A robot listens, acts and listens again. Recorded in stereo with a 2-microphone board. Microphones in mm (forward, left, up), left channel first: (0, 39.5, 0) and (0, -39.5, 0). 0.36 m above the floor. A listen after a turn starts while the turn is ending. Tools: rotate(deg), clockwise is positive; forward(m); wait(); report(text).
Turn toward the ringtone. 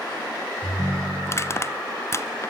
rotate(60)
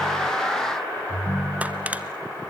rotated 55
rotate(10)
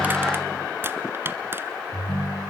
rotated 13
report("Found it: a ringtone, straight ahead.")